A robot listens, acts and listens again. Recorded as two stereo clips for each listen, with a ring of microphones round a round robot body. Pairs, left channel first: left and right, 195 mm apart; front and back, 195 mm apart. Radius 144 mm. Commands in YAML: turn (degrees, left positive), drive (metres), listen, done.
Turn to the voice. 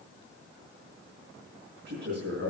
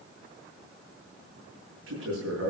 turn: -140
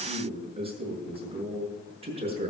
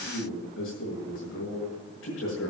turn: -30
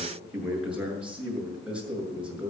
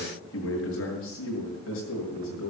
done: "Found it: a man speaking, straight ahead, over 4 m away."